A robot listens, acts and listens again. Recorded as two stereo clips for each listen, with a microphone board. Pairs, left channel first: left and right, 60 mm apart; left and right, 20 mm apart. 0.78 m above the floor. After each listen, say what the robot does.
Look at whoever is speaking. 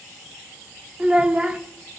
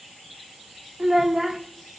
Turn 15° right.
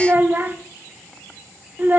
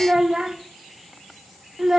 Turn 150° right.
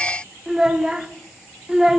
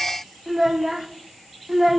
Turn 10° right.
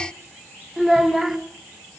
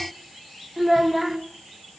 Found it: a child speaking, straight ahead, 1 to 2 m away.